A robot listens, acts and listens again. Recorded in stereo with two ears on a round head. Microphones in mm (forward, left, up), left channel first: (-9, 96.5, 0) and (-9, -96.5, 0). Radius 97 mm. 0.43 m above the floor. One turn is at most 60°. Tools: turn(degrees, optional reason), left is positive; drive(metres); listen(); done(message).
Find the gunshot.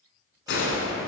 turn(degrees=60, reason="The gunshot: about 65° left or 115° left.")
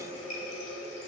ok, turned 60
listen()
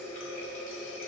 done("I heard a gunshot, but can't make it out now. It was about 5° left or 55° left.")